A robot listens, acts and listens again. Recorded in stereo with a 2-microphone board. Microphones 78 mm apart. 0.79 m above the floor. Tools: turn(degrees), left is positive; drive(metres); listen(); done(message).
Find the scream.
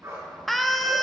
turn(degrees=30)
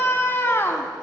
turn(degrees=145)
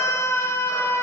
turn(degrees=40)
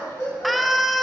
done("Facing the scream.")